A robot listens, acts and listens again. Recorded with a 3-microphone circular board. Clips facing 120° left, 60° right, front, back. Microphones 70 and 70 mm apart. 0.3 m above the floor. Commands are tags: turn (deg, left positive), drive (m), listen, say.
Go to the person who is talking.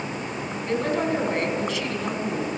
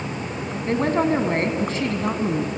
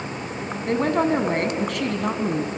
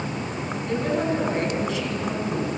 <turn deg="-15"/>
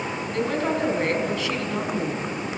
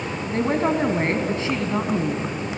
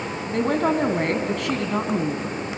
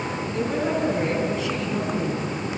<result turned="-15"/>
<drive m="1.0"/>
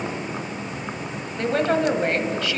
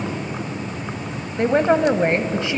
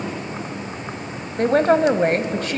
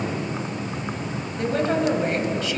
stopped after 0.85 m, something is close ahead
<say>Arrived at the woman speaking, straight ahead.</say>